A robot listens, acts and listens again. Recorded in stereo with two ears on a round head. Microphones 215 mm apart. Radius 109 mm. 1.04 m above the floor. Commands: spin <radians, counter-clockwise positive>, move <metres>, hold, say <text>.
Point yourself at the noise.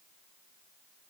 hold
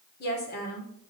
spin 0.70
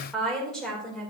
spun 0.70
say Facing the woman speaking, over 4 m away.